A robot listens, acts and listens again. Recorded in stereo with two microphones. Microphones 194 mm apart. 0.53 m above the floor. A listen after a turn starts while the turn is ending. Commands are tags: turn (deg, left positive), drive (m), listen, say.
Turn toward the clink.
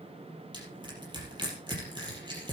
<listen/>
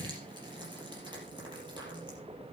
<listen/>
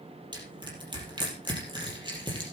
<say>I can't make out a clink to turn to.</say>